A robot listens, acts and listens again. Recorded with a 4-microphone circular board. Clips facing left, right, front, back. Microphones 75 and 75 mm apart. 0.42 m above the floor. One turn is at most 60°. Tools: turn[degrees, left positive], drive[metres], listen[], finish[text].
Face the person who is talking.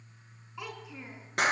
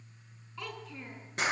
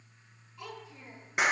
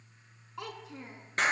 Thought: The child speaking: 165° left.
Action: turn[60]
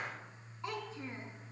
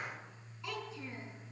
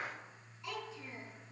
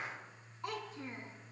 Thought: The child speaking is now 140° left.
Action: turn[60]
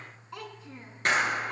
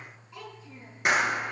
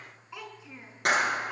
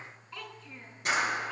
Thought: The child speaking is now 75° left.
Action: turn[60]
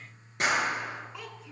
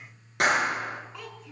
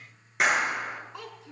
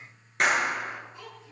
Action: finish[Facing the child speaking, 2 to 4 m away.]